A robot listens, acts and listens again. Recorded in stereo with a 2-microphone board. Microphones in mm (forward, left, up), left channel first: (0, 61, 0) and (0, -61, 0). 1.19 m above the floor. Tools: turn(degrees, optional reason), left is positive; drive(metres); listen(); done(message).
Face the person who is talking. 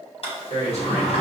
turn(degrees=60, reason="The man speaking: about 60° left or 120° left.")
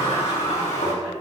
listen()
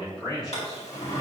done("Found it: a man speaking, straight ahead.")